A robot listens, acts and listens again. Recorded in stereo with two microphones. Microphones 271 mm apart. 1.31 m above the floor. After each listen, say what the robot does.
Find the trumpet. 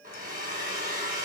Keep listening.
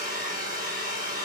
Keep listening.
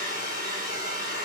I can't make out a trumpet, only a hair dryer.